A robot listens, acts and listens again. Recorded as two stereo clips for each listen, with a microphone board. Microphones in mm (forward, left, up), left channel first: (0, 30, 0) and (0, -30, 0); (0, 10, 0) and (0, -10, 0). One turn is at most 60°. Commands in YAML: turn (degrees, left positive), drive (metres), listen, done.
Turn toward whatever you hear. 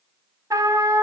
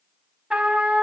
turn: -60
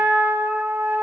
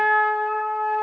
turn: -35
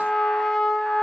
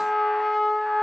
done: "Facing the trumpet, 1 to 2 m away."